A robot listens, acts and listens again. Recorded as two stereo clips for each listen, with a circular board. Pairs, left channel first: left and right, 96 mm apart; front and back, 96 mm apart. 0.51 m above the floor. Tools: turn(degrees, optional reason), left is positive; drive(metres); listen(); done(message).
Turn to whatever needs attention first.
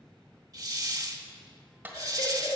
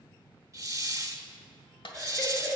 turn(degrees=85, reason="The baby crying: 85° left.")
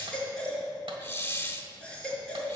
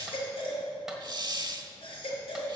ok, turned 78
turn(degrees=10, reason="The baby crying is now 10° left.")
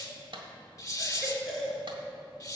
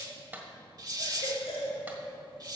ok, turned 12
done("Facing the baby crying.")